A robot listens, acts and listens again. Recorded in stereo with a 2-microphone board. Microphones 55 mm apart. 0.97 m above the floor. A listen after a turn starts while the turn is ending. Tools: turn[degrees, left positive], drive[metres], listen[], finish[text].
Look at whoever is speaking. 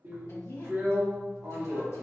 Thought: The woman speaking: about 65° left or 115° left.
Action: turn[65]
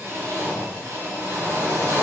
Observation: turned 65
Action: listen[]
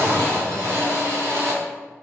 Action: listen[]
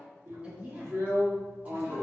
Thought: So it is at 25° right.
Action: turn[-25]
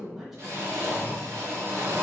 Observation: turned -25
Action: listen[]
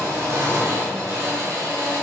Action: listen[]
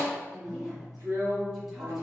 Action: finish[I heard a woman speaking from this way, but can't make it out now.]